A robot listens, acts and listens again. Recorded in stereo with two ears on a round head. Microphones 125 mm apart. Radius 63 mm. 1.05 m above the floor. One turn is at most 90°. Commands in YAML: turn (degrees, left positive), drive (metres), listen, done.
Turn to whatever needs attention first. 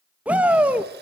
turn: -30
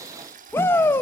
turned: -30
turn: 15
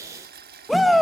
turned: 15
done: "Found it: a shout, straight ahead."